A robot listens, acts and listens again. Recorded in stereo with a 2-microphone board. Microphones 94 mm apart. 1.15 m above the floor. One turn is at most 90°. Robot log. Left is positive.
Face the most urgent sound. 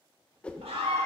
cmd yaw -90
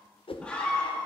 note: So it is at 10° left.
cmd yaw +10
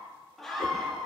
end: Found it: a scream, straight ahead, 1 to 2 m away.